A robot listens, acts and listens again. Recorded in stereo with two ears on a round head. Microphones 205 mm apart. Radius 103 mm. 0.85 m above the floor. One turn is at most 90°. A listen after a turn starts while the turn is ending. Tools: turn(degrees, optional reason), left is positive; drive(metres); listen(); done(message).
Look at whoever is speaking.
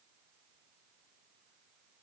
listen()
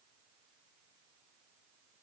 listen()
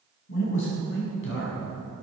turn(degrees=55, reason="The man speaking: about 55° left or 125° left.")
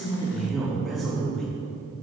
done("Found it: a man speaking, straight ahead.")